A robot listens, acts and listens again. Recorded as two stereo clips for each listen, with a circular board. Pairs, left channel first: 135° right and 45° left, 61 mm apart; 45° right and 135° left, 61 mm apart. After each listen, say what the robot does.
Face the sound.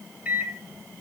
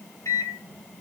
Turn 20° right.
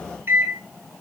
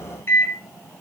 Found it: a microwave, straight ahead.